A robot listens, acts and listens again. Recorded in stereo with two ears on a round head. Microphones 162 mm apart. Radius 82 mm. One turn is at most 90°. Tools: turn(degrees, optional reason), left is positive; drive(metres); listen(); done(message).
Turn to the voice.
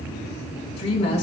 turn(degrees=35, reason="The woman speaking: about 35° left or 145° left.")
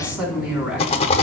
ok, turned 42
done("Facing the woman speaking.")